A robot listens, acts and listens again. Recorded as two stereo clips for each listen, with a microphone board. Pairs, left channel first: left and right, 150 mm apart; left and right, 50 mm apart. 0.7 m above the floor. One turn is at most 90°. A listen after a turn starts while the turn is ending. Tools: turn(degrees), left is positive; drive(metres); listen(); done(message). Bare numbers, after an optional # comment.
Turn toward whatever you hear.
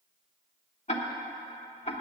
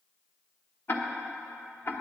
# The ticking: about 50° left or 130° left.
turn(50)
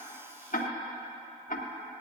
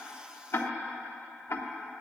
# So it is at 75° left.
turn(75)
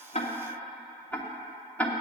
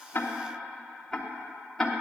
# The ticking is now 10° left.
turn(10)
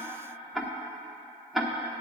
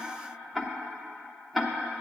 done("Found it: ticking, straight ahead.")